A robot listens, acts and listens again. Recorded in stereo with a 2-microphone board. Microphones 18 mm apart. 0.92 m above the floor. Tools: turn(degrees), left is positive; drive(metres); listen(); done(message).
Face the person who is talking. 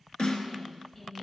turn(degrees=30)
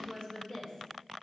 turn(degrees=115)
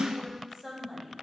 done("Facing the woman speaking.")